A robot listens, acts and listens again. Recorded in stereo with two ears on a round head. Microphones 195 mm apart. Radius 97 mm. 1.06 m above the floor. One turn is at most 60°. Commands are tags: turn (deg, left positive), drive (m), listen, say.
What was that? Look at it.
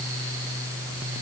<listen/>
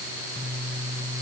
<listen/>
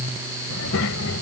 <turn deg="60"/>
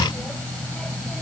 <say>Facing the child speaking.</say>